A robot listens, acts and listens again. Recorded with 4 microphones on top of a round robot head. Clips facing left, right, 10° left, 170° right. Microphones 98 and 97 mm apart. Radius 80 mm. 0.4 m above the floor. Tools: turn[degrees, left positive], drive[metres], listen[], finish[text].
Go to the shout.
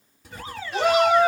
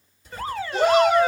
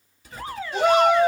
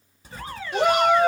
Thought: The shout: 175° left.
Action: turn[175]
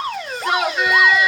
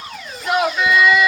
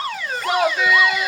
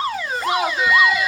Action: drive[1.0]
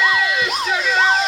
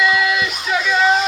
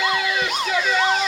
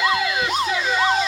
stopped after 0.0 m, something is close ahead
Action: finish[Something is in my way. I am facing the shout but have not reached it.]